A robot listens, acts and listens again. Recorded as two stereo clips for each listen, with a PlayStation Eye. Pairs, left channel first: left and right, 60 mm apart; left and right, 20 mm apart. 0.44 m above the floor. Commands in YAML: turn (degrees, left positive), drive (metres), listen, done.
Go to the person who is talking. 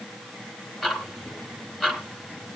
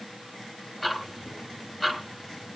listen: true
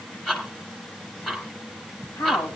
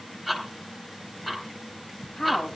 turn: 50
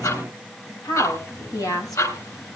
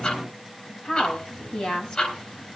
turn: 75
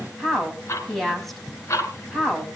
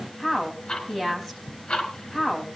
drive: 1.0
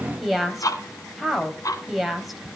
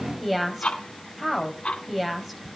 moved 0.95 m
drive: 1.0
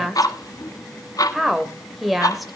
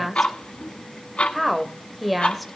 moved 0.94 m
drive: 1.0
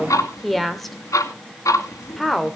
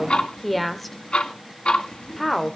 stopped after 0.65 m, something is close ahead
done: "Arrived at the woman speaking, straight ahead."